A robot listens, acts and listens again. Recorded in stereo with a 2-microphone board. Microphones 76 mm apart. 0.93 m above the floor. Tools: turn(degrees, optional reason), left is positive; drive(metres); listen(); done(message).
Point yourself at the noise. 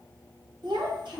turn(degrees=-90)
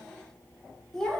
done("Facing the child speaking, 1 to 2 m away.")